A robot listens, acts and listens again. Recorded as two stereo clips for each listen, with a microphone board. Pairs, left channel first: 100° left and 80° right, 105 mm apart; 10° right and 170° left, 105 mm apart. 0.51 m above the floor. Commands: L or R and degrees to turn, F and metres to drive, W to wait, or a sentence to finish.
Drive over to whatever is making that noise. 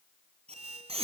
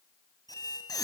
R65
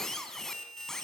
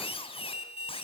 L15
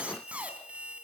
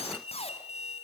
F1.0
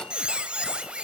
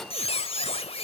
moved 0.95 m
F1.0
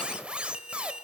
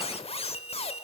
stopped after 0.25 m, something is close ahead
Arrived at the squeak, straight ahead.